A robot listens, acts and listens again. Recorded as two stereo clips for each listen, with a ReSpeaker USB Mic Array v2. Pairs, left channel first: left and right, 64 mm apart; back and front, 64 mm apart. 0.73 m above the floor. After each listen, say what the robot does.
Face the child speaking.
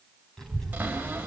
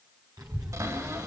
Facing the child speaking, 2 to 4 m away.